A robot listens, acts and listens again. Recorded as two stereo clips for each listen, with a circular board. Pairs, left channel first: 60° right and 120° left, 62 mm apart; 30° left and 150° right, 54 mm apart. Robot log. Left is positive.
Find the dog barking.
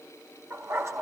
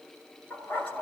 note: The dog barking: 80° left.
cmd yaw +80
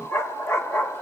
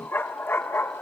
end: Facing the dog barking.